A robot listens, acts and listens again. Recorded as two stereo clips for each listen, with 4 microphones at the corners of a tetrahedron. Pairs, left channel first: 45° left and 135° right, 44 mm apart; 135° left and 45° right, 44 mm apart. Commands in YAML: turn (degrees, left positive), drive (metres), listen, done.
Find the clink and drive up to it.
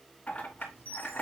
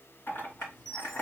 turn: 105
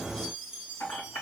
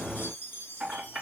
turn: 40
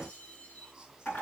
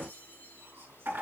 drive: 1.0
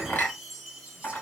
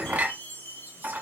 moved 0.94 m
drive: 1.0
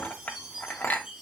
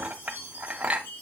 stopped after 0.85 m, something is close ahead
done: "Arrived at the clink, straight ahead."